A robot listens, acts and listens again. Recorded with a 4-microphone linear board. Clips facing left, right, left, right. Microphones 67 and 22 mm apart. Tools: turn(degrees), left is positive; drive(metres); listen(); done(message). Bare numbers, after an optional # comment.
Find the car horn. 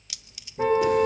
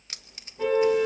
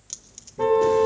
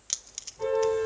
# The car horn: about 40° left or 140° left.
turn(40)
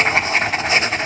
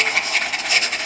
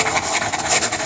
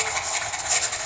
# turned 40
listen()
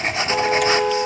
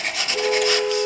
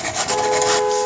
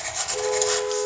# So it is at 100° left.
turn(100)
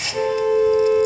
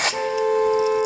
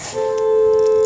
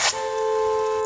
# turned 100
# The car horn is now 25° right.
turn(-25)
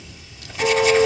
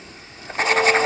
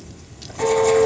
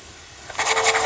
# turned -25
# The car horn is now 15° left.
turn(15)
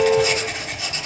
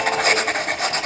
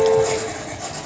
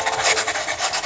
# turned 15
done("Facing the car horn.")